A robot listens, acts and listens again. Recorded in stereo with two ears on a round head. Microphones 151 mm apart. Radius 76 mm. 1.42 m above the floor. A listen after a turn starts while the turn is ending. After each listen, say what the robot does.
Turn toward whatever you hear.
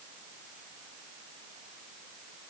Keep listening.
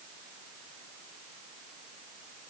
Keep listening.
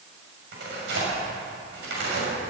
Turn 70° right.
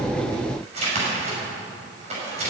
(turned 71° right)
Turn 40° right.
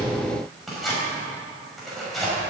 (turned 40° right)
Facing the tearing paper, over 4 m away.